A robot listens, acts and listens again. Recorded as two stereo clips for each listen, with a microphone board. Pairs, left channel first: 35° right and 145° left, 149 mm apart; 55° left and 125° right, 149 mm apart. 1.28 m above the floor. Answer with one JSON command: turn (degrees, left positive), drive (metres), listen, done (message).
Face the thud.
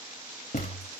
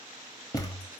{"done": "Facing the thud, 1 to 2 m away."}